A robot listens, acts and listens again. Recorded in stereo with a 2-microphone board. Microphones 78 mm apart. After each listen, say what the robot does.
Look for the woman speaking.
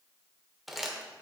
Keep listening.
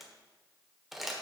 Keep listening.
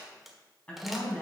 Turn 30° left.
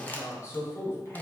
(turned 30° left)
Turn 145° left.
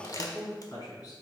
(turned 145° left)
Turn 55° left.
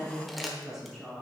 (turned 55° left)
Facing the woman speaking, over 4 m away.